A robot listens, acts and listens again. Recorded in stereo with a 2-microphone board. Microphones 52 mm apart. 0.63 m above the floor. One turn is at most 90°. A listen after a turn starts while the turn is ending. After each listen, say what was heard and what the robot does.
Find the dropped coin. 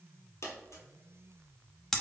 The dropped coin: about 70° left or 110° left. Turn 70° left.
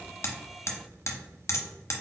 Keep listening.
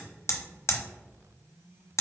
I heard a dropped coin, but can't make it out now. It was about straight ahead or 40° left.